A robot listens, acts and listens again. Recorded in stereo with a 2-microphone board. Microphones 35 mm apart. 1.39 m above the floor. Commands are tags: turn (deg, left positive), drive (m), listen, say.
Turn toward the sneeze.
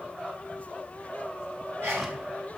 <turn deg="-90"/>
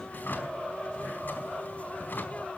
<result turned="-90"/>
<say>Facing where the sneeze came from. I can't hear it now.</say>